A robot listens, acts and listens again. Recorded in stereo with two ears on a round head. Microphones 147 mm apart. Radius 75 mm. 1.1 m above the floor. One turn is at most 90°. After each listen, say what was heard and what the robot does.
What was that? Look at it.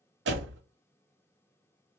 Turn 90° right.
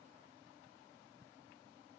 I heard a door slam from this way, but can't make it out now.